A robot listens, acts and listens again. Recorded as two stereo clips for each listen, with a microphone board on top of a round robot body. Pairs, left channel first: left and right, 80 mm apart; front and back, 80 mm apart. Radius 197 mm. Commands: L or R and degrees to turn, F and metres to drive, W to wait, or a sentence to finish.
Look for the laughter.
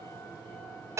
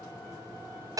W
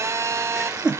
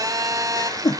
R10
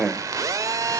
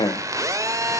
R15
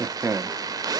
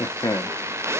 R45
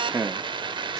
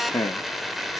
R35
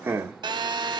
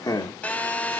R30
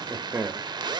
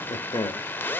R25
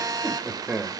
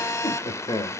R10
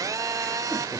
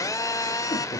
Facing the laughter.